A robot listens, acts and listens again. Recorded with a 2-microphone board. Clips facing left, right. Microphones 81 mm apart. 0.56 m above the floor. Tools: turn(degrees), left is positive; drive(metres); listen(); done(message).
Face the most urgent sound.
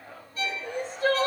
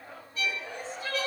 turn(degrees=65)
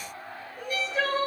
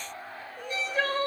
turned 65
done("Facing the crying, 2 to 4 m away.")